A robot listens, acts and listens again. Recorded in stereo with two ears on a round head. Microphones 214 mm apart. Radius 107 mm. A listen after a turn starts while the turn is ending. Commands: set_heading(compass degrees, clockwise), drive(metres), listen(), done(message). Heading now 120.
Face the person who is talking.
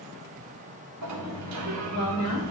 set_heading(30)
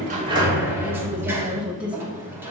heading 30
done("Found it: a woman speaking, straight ahead.")